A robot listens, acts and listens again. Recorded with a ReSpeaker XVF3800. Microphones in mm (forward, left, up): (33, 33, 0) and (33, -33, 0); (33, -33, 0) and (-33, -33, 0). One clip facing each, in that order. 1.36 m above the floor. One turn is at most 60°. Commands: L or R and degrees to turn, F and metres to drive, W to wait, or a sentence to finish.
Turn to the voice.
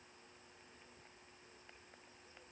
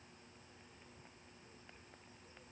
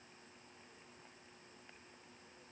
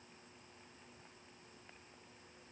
W
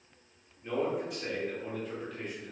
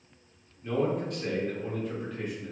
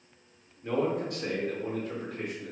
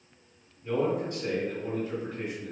Facing the man speaking.